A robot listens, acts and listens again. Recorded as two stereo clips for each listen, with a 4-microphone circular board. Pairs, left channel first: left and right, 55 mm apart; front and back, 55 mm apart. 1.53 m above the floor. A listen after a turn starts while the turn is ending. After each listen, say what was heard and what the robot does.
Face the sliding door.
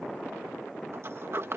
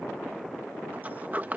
The sliding door: 125° right. Turn 125° right.
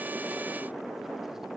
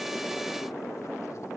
Keep listening.
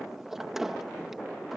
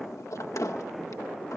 Found it: a sliding door, straight ahead.